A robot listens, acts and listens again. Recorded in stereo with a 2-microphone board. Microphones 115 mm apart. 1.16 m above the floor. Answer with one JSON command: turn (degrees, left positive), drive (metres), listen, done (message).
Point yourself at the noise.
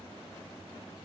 {"listen": true}
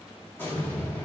{"turn": 20}
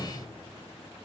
{"listen": true}
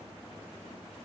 {"done": "I heard an explosion, but can't make it out now. It was about straight ahead or 140° left."}